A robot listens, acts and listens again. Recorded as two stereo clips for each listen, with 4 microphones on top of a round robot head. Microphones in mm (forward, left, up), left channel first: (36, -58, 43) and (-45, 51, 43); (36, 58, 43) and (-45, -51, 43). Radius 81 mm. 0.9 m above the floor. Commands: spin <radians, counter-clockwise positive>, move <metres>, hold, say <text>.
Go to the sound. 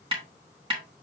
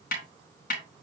spin 1.22
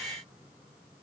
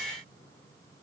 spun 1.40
spin -0.17
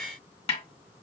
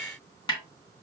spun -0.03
move 1.0
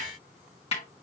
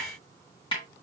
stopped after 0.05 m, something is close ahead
say Something is in my way. I am facing the snare drum but have not reached it.